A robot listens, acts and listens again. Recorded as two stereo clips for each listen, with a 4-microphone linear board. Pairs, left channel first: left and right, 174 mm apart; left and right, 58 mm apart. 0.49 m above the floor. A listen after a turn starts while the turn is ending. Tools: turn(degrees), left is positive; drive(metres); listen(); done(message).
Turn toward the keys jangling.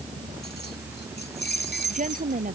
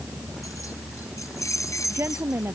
turn(degrees=70)
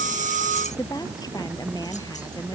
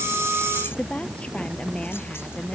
listen()
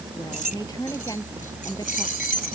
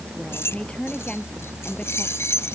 turn(degrees=55)
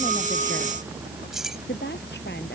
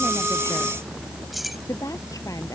done("Found it: keys jangling, straight ahead.")